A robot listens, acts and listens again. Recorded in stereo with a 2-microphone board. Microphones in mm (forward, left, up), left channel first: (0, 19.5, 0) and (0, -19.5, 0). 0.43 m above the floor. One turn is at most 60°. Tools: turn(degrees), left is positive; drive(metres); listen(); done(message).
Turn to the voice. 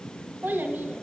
turn(degrees=-55)
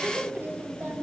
turn(degrees=-60)
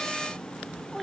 done("Facing the child speaking.")